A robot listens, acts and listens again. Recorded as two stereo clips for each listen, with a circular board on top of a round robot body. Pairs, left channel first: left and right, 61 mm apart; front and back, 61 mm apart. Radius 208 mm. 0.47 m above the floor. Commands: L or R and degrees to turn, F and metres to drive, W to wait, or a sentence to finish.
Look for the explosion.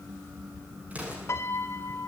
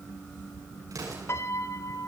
R155
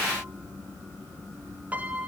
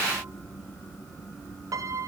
Facing where the explosion came from. I can't hear it now.